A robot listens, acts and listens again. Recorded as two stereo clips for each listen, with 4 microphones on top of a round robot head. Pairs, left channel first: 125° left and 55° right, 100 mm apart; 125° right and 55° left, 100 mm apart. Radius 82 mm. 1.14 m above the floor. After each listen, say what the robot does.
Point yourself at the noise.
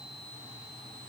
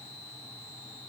Keep listening.
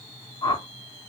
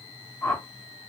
Turn 170° left.
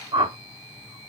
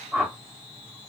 Turn 20° right.
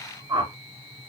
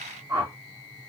Found it: a whoosh, straight ahead, 1 to 2 m away.